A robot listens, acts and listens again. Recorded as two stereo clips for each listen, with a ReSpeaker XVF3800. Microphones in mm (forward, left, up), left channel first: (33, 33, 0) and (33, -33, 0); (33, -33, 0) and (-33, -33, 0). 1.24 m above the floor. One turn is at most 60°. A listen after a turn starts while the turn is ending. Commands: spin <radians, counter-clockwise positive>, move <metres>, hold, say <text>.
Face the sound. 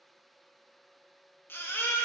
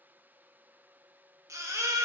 spin 1.05
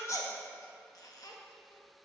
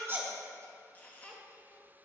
spin 1.05
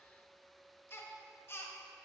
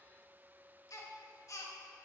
spin 0.61
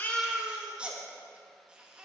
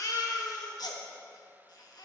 spin -0.26
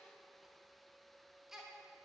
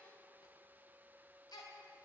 say Found it: a baby crying, straight ahead.